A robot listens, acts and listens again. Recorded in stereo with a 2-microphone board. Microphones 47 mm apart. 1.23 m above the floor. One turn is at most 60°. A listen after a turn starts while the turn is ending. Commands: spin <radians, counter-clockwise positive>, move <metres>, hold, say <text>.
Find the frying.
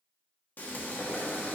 spin 0.70
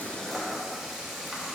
say Facing the frying, 1 to 2 m away.